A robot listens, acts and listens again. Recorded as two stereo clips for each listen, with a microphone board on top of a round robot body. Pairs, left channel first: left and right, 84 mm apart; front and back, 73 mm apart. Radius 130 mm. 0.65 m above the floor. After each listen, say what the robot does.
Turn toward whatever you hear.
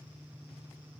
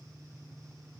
Keep listening.
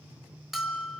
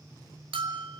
Turn 175° right.
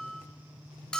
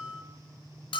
Turn 10° left.
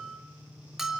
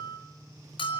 Facing the bell.